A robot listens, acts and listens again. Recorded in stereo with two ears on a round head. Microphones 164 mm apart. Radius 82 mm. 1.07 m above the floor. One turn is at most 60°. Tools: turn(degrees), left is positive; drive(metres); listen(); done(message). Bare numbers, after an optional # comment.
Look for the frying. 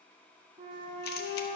listen()
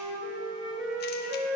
listen()
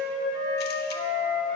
done("I can't make out frying, only a flute.")